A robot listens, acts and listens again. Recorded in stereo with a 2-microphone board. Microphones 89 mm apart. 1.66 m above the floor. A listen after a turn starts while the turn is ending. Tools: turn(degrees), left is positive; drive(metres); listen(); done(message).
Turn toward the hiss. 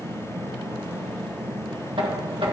listen()
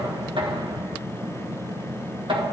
listen()
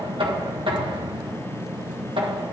done("I can't make out a hiss to turn to.")